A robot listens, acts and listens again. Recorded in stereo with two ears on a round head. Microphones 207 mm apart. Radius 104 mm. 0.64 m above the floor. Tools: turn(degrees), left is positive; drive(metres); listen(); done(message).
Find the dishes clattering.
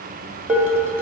turn(degrees=-30)
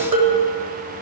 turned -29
turn(degrees=-140)
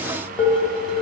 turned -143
done("Found it: dishes clattering, straight ahead, 1 to 2 m away.")